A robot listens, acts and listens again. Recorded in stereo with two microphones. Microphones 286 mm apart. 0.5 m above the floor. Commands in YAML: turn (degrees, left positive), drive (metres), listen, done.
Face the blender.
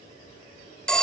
listen: true
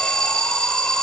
listen: true
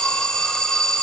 done: "I can't make out a blender to turn to."